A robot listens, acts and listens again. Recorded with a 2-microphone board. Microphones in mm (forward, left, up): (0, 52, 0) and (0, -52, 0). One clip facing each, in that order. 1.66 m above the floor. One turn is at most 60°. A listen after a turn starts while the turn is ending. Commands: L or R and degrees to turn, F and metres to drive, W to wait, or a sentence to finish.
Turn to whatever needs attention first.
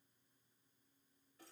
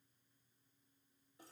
W
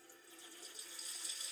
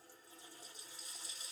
W
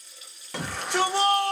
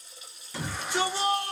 L60
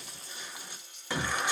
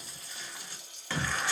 L20
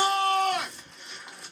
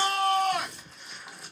Facing the shout, 1 to 2 m away.